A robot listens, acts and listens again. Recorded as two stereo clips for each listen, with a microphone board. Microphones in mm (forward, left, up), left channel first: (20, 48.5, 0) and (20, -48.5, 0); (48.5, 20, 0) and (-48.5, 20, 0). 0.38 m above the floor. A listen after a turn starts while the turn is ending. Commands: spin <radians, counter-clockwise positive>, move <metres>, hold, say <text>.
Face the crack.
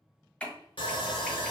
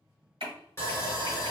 spin 2.88
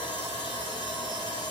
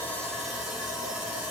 say I heard a crack from this way, but can't make it out now.